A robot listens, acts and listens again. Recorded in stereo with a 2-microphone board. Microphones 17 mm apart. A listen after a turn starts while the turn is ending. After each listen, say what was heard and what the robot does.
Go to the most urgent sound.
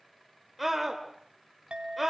Turn 30° right.
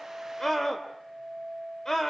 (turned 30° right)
So it is at 25° left. Turn 25° left.
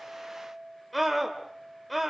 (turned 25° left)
Drive 1.0 m forward.
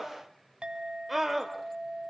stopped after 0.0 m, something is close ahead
The scream is now 10° right. Turn 10° right.
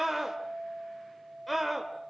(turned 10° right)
Blocked. The scream is further on, straight ahead.